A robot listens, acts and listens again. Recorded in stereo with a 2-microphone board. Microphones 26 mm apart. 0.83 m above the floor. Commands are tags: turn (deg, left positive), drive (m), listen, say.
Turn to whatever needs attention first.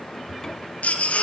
<turn deg="90"/>
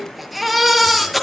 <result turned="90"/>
<say>Facing the baby crying, over 4 m away.</say>